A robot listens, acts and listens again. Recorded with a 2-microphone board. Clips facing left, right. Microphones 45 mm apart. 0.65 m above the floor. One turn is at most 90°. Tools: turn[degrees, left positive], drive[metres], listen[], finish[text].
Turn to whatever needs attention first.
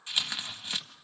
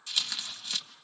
Action: listen[]
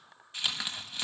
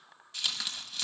Action: listen[]
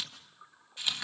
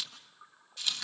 Action: finish[I can't make out anything urgent to turn to.]